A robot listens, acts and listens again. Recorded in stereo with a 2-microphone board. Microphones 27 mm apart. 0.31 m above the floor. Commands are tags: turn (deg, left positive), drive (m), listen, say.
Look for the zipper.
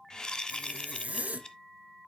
<turn deg="-65"/>
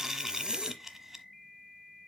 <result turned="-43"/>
<turn deg="-35"/>
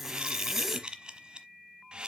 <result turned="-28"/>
<turn deg="-10"/>
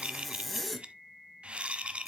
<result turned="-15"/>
<say>Facing the zipper.</say>